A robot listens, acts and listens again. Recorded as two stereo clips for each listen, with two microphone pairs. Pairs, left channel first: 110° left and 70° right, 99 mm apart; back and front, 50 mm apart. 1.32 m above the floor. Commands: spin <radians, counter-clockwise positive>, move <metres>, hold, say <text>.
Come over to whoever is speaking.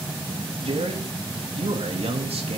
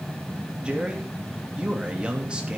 spin -1.22
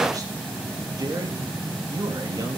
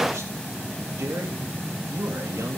spin -0.35
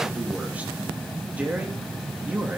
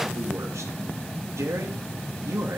move 1.0
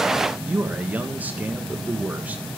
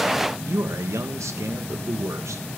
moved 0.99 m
move 1.0
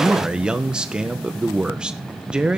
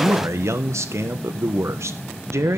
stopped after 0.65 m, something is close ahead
spin 0.17
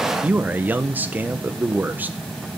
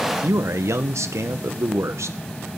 say Arrived at the man speaking, straight ahead.